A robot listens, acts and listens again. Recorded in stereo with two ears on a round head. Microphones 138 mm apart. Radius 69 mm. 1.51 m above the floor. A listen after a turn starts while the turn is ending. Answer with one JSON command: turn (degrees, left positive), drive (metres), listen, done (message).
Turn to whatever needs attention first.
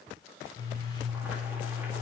{"listen": true}
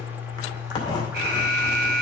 {"turn": -75}
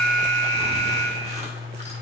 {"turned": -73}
{"turn": -30}
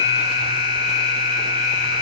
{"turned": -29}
{"done": "Found it: an alarm, straight ahead, 2 to 4 m away."}